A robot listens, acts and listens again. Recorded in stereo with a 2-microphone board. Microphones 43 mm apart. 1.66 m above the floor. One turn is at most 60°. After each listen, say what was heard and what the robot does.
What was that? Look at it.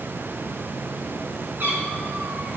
The cat meowing: about 45° right or 135° right. Turn 45° right.
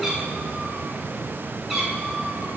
Facing the cat meowing.